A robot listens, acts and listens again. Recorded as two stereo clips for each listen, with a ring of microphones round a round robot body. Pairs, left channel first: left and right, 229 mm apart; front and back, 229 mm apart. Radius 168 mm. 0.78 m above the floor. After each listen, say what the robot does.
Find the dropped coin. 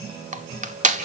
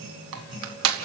Keep listening.
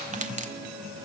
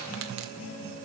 Keep listening.
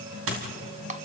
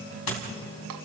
Turn 40° right.
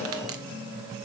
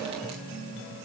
I heard a dropped coin from this way, but can't make it out now.